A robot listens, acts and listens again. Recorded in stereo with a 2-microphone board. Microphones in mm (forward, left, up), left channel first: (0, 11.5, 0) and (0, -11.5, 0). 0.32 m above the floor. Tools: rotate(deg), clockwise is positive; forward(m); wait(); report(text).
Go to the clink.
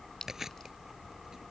rotate(-25)
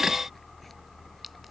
wait()
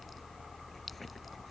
wait()
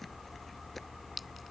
forward(1.0)
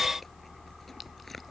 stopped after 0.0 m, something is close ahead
wait()
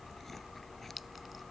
wait()
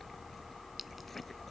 report("I heard a clink from this way, but can't make it out now. I did not reach it.")